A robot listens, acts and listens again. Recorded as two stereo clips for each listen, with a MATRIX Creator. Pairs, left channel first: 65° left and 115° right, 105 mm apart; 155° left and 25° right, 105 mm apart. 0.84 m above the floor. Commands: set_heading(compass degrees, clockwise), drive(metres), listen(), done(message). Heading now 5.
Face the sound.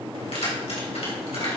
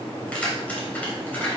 set_heading(280)
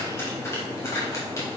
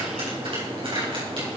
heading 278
done("Found it: keys jangling, straight ahead, 2 to 4 m away.")